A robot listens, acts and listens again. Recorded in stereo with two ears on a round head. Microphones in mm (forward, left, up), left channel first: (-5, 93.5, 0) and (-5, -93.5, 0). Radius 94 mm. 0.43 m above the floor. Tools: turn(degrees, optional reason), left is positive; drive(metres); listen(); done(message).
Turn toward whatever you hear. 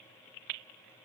listen()
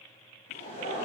turn(degrees=35, reason="The laughter: about 35° left or 145° left.")
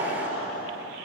turn(degrees=110, reason="So it is at 110° left.")
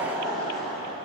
done("Found it: laughter, straight ahead, 2 to 4 m away.")